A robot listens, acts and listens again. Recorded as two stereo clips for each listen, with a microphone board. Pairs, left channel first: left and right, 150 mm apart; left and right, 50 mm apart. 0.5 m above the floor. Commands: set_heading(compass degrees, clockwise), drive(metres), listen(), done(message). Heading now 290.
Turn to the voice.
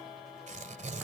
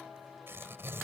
listen()
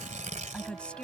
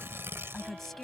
set_heading(260)
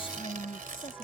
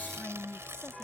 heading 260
set_heading(120)
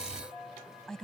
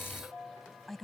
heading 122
done("Found it: a woman speaking, straight ahead.")